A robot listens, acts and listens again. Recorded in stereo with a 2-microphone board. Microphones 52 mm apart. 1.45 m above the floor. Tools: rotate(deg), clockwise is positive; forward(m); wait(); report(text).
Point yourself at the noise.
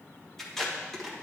rotate(-30)
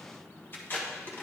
rotate(-140)
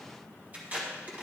rotate(30)
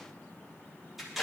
report("Facing the tape being pulled.")